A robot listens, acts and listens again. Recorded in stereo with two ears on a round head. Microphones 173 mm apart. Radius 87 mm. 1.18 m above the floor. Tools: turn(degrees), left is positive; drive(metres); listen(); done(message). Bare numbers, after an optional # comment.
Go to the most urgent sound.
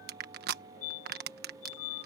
# The fire alarm: about 40° left or 140° left.
turn(40)
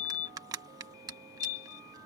# So it is at 95° left.
turn(95)
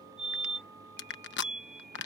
drive(1.0)
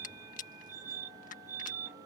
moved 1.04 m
# The fire alarm is now 10° right.
turn(-10)
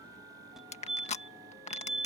drive(1.0)
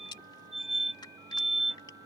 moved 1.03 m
drive(1.0)
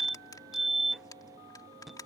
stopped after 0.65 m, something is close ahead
done("Arrived at the fire alarm, straight ahead.")